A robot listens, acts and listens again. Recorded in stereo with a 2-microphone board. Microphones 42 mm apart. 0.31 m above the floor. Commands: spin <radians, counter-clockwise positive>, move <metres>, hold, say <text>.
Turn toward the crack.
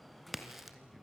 spin -0.52
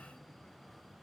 hold
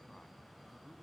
say I heard a crack, but can't make it out now. It was about 25° left or 145° right.